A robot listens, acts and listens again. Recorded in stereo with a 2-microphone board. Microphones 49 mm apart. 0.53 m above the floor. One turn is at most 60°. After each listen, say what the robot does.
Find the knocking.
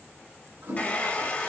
Keep listening.
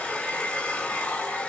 Keep listening.
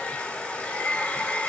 I can't make out knocking to turn to.